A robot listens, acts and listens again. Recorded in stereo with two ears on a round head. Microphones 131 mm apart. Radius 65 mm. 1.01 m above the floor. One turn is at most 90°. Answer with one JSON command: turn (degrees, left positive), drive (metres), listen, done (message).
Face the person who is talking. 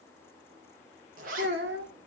{"turn": -90}
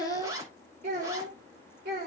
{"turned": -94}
{"turn": -65}
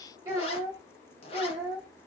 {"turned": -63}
{"turn": -20}
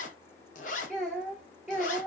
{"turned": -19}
{"done": "Facing the child speaking, 2 to 4 m away."}